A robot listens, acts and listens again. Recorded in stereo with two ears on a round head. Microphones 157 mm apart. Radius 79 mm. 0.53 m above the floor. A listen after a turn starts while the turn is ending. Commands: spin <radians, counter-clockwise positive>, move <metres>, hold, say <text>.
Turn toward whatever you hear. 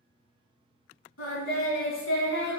spin 1.31
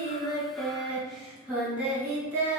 spin -0.26
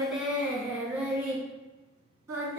spin -0.26
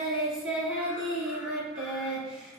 say Facing the singing.